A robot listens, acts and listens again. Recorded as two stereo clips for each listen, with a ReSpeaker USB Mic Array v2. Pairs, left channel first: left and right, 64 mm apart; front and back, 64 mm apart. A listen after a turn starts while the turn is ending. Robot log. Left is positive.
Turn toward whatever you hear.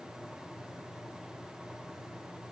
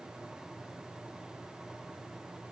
cmd idle
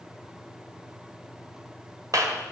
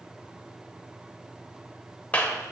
note: The clap: 70° right.
cmd yaw -70
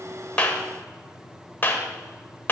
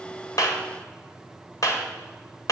note: The clap is now 30° left.
cmd yaw +30
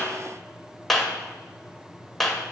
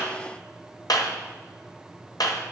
end: Facing the clap, 1 to 2 m away.